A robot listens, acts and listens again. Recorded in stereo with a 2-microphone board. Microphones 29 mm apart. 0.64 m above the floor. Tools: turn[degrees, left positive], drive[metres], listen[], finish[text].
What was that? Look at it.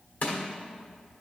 Thought: The crushing: about 55° left or 125° left.
Action: turn[55]
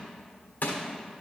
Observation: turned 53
Thought: So it is at 65° left.
Action: turn[65]
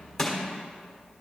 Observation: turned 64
Action: finish[Facing the crushing.]